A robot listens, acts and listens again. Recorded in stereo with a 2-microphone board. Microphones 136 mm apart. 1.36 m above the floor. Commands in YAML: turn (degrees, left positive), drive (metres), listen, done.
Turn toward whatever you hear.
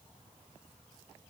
listen: true
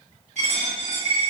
turn: -55
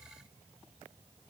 listen: true
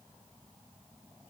done: "I heard a dropped coin, but can't make it out now. It was about straight ahead or 70° right."